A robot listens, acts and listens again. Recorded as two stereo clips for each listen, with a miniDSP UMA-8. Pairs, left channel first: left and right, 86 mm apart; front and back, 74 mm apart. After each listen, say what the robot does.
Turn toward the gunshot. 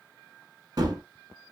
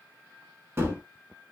Turn 125° right.
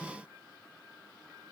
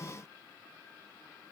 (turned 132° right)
Facing where the gunshot came from. I can't hear it now.